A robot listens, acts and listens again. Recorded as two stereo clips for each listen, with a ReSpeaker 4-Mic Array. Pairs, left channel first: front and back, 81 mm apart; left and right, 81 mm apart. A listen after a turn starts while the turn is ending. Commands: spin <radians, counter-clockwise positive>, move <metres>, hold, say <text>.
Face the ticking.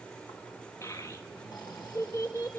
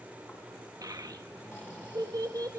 hold
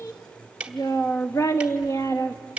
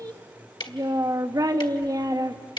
spin 1.83
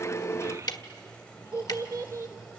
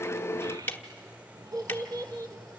spin 0.44
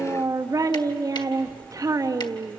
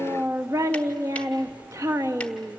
hold
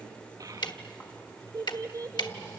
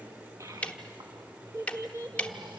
spin 0.26
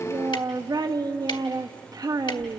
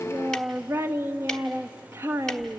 hold
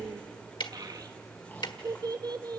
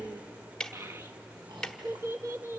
spin 0.17
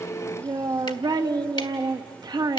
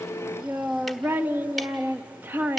hold
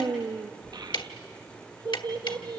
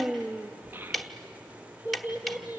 say Found it: ticking, straight ahead, 1 to 2 m away.